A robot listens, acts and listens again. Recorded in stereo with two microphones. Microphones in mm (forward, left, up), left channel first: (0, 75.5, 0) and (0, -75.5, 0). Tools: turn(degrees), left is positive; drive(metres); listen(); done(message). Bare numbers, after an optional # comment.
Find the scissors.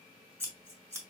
# The scissors: about 20° right or 160° right.
turn(-20)
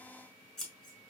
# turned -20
done("Facing the scissors.")